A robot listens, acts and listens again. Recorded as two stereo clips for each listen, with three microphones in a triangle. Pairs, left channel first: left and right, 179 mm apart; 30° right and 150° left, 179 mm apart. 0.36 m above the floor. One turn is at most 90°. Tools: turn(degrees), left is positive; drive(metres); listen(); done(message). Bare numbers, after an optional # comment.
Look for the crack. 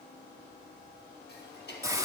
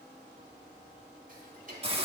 listen()
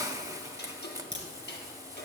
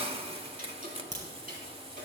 # The crack: 105° right.
turn(-90)
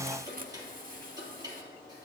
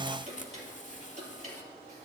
# Nothing new. It was at 15° right.
turn(-15)
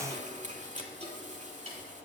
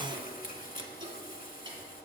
done("Facing where the crack came from. I can't hear it now.")